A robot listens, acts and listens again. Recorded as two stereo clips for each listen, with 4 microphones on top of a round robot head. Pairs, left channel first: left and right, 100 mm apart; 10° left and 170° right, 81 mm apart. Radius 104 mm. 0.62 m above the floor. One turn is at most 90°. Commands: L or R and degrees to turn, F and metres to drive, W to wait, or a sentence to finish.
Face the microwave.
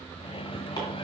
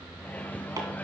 L85
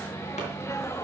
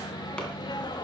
L30
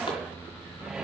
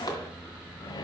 Found it: a microwave, straight ahead.